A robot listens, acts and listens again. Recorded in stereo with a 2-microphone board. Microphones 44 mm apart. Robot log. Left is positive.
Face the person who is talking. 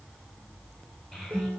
cmd yaw +30
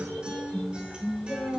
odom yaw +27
note: So it is at 145° left.
cmd yaw +145
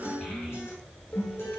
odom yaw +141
cmd idle
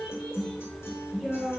end: Found it: a child speaking, straight ahead, over 4 m away.